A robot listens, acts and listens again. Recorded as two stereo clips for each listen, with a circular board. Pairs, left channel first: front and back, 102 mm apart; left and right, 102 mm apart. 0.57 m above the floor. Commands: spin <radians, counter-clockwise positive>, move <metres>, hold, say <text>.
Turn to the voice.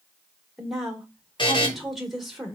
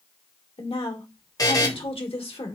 spin 1.57
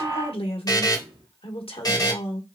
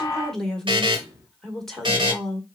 say Found it: a woman speaking, straight ahead, 1 to 2 m away.